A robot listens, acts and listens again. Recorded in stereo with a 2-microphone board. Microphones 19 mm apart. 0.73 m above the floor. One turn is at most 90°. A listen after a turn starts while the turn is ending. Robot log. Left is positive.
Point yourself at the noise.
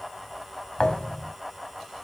note: The thud: about 50° left or 130° left.
cmd yaw +50
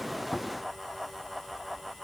cmd idle
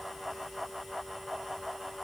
end: I heard a thud, but can't make it out now. It was about straight ahead or 80° left.